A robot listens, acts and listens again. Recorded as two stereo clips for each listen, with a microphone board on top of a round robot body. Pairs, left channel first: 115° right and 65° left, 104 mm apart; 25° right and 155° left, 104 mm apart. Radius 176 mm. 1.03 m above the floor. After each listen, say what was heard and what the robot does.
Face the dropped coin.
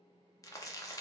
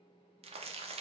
Keep listening.
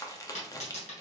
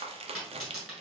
The dropped coin: 120° right. Turn 120° right.
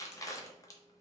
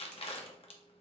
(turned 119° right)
Facing where the dropped coin came from. I can't hear it now.